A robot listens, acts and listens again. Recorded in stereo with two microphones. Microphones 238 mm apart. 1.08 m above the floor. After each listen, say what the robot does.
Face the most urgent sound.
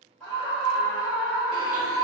Turn 30° left.
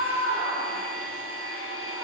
Turn 25° right.
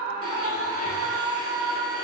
Found it: a scream, straight ahead, 1 to 2 m away.